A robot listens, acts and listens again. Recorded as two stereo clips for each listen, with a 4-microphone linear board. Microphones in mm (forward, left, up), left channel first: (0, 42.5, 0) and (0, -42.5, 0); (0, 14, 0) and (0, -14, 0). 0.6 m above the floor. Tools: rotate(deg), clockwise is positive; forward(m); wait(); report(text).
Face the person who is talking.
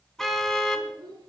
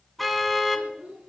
rotate(65)
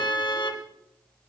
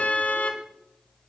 wait()
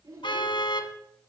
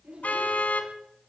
rotate(50)
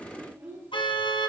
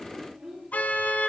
rotate(30)
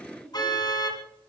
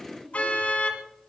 report("Facing the child speaking, over 4 m away.")